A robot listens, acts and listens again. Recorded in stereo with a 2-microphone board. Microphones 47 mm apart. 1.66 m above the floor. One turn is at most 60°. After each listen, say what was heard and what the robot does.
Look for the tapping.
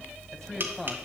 The tapping: about 45° right or 135° right. Turn 45° right.
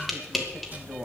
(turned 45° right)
Facing the tapping, 2 to 4 m away.